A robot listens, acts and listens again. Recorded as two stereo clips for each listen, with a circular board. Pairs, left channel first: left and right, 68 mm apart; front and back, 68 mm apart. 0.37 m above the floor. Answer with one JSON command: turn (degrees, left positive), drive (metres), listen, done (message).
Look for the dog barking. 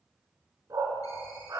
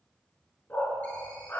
{"turn": -60}
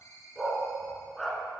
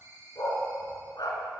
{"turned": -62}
{"done": "Found it: a dog barking, straight ahead, 1 to 2 m away."}